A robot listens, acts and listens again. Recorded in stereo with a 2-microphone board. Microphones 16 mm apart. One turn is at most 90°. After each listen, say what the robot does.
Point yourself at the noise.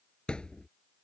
Turn 75° left.
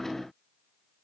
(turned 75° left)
Keep listening.
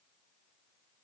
I heard a thud, but can't make it out now. It was about straight ahead or 30° left.